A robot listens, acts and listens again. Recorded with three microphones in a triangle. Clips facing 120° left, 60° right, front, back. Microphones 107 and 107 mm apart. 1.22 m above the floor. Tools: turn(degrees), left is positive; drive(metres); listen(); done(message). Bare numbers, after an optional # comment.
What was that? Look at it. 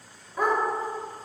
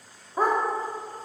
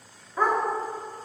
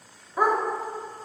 # The dog barking: 100° right.
turn(-100)
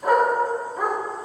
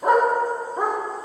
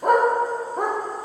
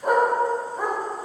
done("Found it: a dog barking, straight ahead, 1 to 2 m away.")